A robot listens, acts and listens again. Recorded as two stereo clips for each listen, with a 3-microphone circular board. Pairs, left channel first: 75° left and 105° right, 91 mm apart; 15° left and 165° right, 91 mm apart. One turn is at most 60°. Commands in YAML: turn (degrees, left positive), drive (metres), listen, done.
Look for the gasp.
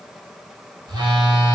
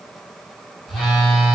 listen: true
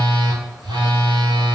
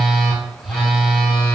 listen: true
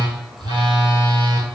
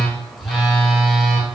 done: "I can't make out a gasp, only a phone buzzing."